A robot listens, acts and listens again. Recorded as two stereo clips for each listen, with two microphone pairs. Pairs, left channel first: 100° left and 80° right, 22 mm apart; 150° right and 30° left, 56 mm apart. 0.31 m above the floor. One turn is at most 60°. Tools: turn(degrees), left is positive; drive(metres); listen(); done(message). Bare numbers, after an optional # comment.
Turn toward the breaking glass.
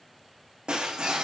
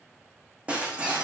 # The breaking glass: 35° right.
turn(-35)
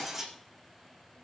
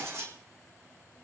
done("Found it: breaking glass, straight ahead, 2 to 4 m away.")